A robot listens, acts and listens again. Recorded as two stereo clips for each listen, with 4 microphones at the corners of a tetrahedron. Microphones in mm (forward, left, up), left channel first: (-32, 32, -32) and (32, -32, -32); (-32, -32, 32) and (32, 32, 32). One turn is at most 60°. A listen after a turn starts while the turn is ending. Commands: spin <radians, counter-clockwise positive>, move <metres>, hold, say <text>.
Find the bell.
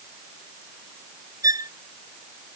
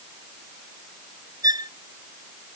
hold
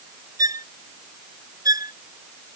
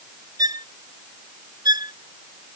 hold
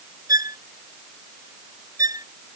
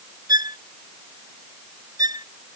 say I can't make out a bell to turn to.